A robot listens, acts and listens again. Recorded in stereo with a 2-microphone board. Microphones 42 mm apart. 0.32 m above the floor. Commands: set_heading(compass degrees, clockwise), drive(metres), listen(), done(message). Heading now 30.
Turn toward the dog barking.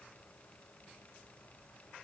listen()
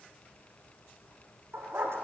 set_heading(120)
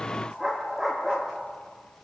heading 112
done("Facing the dog barking, 2 to 4 m away.")